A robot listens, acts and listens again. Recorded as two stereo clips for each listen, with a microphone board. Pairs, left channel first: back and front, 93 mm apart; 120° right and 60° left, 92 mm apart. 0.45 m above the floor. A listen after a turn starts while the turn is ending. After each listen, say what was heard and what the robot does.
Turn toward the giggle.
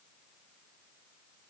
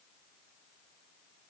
Keep listening.
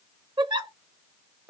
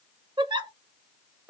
The giggle: 30° left. Turn 30° left.
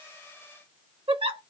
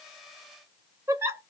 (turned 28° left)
Found it: a giggle, straight ahead.